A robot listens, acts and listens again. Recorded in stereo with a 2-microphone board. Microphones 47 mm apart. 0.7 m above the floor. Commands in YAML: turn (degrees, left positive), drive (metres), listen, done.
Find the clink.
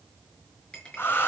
turn: 20
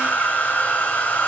listen: true
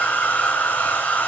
listen: true
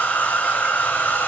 done: "I heard a clink, but can't make it out now. It was about straight ahead or 140° left."